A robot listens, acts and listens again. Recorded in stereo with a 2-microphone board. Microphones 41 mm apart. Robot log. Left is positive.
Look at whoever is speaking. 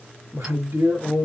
cmd yaw -90
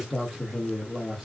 note: So it is at 10° right.
cmd yaw -10
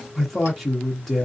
end: Facing the man speaking.